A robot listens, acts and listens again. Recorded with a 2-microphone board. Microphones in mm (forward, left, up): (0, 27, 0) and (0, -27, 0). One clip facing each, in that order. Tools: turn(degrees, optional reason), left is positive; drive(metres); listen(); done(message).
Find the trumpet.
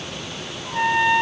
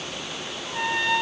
turn(degrees=20, reason="The trumpet: about 20° left or 160° left.")
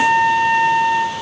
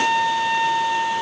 turn(degrees=140, reason="So it is at 140° left.")
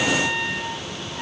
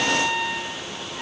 done("Facing the trumpet, 2 to 4 m away.")